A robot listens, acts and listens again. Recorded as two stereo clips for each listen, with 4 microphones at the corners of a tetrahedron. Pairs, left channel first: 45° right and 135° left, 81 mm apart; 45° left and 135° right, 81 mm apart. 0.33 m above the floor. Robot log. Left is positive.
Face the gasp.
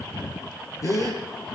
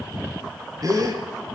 note: The gasp: 95° right.
cmd yaw -95
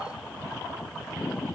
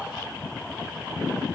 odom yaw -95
end: I heard a gasp from this way, but can't make it out now.